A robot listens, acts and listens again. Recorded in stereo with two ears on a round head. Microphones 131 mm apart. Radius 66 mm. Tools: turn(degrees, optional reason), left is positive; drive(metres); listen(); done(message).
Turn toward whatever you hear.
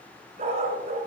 turn(degrees=-55, reason="The dog barking: about 55° right or 125° right.")
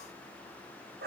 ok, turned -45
turn(degrees=-75, reason="So it is at 75° right.")
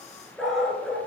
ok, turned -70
done("Found it: a dog barking, straight ahead, 2 to 4 m away.")